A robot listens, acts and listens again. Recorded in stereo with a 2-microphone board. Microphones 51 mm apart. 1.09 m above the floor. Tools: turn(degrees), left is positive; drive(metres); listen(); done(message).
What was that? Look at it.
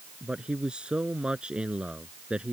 turn(degrees=-20)
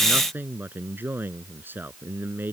turn(degrees=-140)
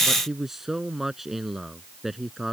done("Found it: a man speaking, straight ahead.")